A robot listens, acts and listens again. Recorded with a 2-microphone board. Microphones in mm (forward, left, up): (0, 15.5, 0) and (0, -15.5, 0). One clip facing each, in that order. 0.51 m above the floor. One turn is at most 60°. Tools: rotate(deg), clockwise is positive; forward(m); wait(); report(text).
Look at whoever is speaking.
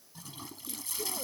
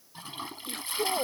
rotate(60)
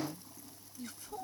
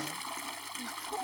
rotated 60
rotate(30)
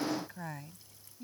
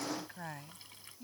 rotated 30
report("Facing the woman speaking.")